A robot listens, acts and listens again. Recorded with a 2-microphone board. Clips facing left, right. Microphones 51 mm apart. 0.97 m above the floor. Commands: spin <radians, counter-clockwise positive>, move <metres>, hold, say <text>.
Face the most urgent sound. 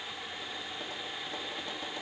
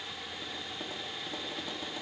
hold
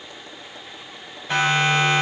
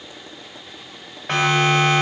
spin -1.22
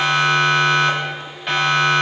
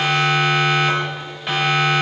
say Found it: a siren, straight ahead, over 4 m away.